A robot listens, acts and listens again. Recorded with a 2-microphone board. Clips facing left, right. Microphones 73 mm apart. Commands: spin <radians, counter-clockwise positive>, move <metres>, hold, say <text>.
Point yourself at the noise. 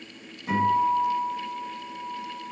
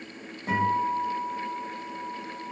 spin -0.70
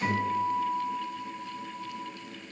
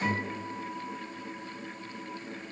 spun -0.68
spin -0.17
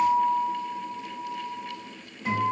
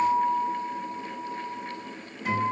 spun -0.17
say Facing the guitar.